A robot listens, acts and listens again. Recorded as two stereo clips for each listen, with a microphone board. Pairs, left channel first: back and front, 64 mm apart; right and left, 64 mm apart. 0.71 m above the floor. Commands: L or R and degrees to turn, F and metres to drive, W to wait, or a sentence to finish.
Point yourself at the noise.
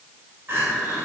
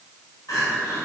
R55
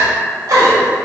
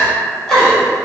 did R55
R10
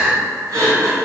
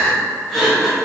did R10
Facing the crying.